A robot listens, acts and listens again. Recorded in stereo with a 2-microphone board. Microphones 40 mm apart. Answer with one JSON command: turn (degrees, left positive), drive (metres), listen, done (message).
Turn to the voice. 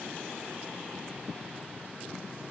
{"listen": true}
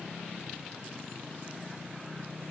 {"listen": true}
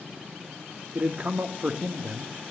{"turn": -35}
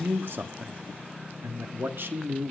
{"turn": -105}
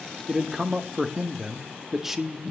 {"turn": -10}
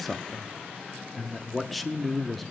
{"done": "Facing the man speaking, 1 to 2 m away."}